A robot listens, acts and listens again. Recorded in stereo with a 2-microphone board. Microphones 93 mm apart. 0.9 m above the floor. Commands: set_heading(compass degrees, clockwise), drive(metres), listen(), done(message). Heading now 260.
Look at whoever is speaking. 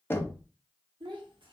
set_heading(325)
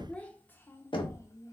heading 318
set_heading(283)
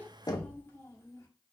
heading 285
set_heading(250)
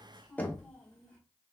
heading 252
set_heading(237)
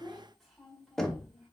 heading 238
done("Facing the child speaking, 1 to 2 m away.")